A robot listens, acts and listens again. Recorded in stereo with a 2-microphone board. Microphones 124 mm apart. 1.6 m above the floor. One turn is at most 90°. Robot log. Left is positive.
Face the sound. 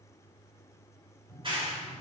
note: The clap: about 40° right or 140° right.
cmd yaw -40
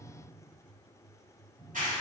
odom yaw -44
note: So it is at 95° right.
cmd yaw -90
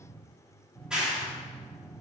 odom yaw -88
end: Facing the clap, 2 to 4 m away.